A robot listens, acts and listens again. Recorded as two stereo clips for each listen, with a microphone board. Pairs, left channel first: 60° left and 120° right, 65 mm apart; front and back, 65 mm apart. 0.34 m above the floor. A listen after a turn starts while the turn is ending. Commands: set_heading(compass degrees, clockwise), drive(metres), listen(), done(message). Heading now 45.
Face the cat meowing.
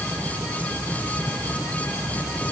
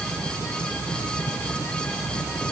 listen()
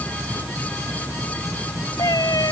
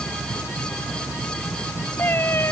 set_heading(355)
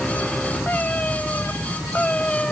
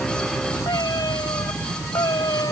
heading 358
set_heading(8)
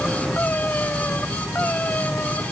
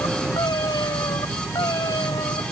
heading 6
done("Found it: a cat meowing, straight ahead.")